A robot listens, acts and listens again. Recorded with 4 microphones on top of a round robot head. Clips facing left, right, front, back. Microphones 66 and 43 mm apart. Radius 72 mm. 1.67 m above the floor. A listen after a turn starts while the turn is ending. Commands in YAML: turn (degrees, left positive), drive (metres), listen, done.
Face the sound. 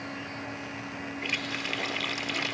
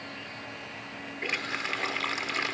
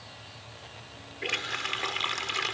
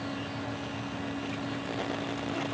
turn: -25
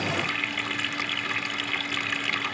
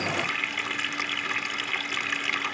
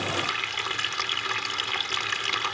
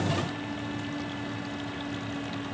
done: "Found it: a running tap, straight ahead."